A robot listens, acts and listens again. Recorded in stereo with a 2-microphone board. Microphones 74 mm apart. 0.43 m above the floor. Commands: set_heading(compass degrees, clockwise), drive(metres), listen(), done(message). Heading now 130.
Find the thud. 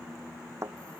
set_heading(175)
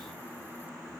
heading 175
listen()
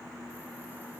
done("I heard a thud, but can't make it out now. It was about straight ahead or 90° right.")